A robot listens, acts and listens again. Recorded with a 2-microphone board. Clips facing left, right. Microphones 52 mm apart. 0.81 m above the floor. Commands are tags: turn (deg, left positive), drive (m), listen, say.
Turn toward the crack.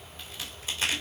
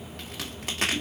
<turn deg="-60"/>
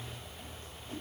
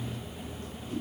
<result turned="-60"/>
<listen/>
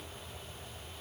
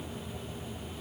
<say>I heard a crack, but can't make it out now. It was about straight ahead or 60° right.</say>